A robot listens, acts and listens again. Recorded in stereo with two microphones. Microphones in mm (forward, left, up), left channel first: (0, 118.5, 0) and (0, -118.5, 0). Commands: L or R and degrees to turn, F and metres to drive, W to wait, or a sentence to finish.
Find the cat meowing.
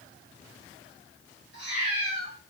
L40
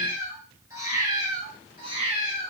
R25
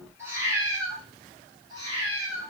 R20
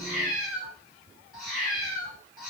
Found it: a cat meowing, straight ahead.